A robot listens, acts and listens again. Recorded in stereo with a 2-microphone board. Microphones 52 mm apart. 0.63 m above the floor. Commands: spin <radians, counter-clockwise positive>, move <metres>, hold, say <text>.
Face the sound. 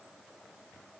hold
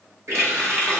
spin -1.13
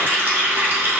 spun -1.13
spin -0.79
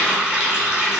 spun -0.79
spin -0.35
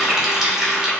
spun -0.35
spin -0.17
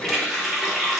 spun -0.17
say Facing the running tap.